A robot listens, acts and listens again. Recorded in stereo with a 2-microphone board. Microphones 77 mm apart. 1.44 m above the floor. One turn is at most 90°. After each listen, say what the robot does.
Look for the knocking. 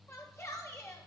Keep listening.
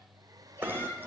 Turn 30° right.
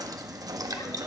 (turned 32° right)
Turn 90° right.
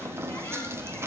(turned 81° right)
Turn 35° right.
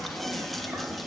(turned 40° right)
Found it: knocking, straight ahead, 1 to 2 m away.